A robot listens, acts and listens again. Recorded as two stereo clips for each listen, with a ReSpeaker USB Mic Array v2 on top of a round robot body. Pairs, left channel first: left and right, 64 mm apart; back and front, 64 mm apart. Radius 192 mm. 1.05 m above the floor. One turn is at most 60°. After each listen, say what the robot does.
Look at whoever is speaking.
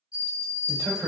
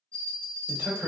Turn 60° right.
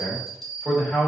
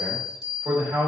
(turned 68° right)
Facing the man speaking.